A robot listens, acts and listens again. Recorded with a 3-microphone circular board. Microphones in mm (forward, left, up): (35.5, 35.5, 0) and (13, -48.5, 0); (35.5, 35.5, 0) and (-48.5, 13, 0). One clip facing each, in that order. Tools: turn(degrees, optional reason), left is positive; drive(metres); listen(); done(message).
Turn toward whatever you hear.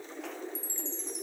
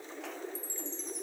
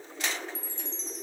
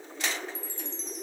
turn(degrees=70, reason="The chime: 70° left.")
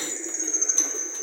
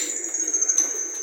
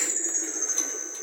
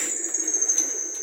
turn(degrees=-15, reason="The chime is now 15° right.")
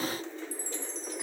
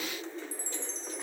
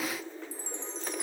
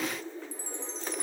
done("Facing the chime.")